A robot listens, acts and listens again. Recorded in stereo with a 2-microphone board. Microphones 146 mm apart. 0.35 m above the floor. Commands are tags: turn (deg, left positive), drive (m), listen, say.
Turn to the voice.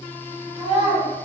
<turn deg="-40"/>
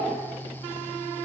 <listen/>
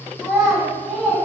<say>Found it: a child speaking, straight ahead, 1 to 2 m away.</say>